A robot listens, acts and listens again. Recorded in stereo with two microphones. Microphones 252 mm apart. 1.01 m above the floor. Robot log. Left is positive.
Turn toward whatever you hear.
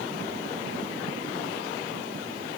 cmd idle
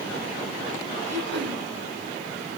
cmd yaw -90
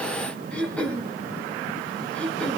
end: Found it: throat clearing, straight ahead.